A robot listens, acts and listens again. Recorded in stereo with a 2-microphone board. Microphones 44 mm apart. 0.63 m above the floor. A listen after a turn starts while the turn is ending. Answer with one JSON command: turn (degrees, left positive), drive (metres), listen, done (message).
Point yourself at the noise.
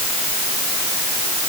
{"listen": true}
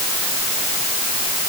{"listen": true}
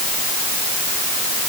{"done": "I can't make out anything to turn to."}